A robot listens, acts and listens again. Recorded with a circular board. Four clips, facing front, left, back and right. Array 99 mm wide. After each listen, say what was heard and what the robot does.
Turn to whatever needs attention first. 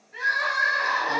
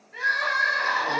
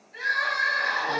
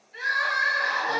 The crying: 60° left. Turn 60° left.
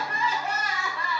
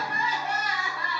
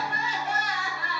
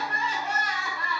Facing the crying, under 1 m away.